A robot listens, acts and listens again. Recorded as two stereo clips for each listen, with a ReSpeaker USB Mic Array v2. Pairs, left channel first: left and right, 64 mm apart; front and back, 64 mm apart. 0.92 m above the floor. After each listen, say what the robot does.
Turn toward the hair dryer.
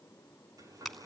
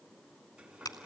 Turn 100° right.
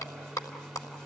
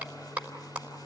Turn 10° left.
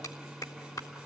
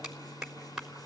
Facing the hair dryer, over 4 m away.